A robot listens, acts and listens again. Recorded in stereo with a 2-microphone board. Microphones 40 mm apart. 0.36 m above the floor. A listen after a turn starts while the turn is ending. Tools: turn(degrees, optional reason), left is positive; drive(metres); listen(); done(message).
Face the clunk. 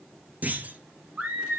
turn(degrees=-45, reason="The clunk: about 45° right or 135° right.")
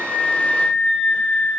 listen()
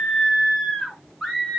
done("I heard a clunk, but can't make it out now. It was about straight ahead or 90° right.")